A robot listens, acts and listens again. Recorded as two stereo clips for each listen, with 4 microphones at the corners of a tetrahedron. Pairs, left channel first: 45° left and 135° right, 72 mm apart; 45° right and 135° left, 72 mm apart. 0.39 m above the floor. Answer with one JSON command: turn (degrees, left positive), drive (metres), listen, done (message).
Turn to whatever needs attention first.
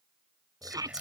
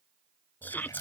{"turn": -110}
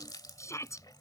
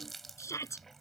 {"done": "Facing the shout."}